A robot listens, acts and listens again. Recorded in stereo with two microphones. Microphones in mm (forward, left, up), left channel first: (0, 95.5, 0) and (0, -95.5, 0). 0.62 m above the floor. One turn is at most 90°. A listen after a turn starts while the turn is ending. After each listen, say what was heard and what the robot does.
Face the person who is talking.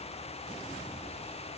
Keep listening.
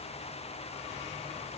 Keep listening.
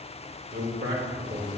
The man speaking: about 55° right or 125° right. Turn 55° right.
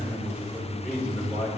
Facing the man speaking, 2 to 4 m away.